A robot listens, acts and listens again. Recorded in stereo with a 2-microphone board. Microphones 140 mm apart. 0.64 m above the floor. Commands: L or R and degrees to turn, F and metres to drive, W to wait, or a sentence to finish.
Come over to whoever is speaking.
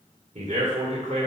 R60
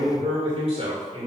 R50
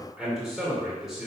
F1.0
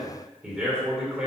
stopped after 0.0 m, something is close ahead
Something is in my way. I am facing the man speaking but have not reached it.